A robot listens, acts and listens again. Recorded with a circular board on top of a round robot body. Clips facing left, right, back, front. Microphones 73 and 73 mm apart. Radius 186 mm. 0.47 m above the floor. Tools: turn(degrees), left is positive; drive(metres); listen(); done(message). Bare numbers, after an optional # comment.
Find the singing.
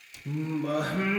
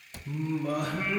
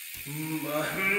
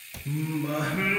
# The singing: 80° left.
turn(80)
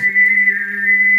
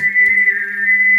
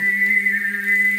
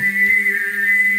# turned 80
# The singing is now 10° right.
turn(-10)
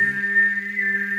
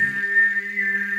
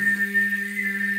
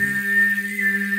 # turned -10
done("Found it: singing, straight ahead, over 4 m away.")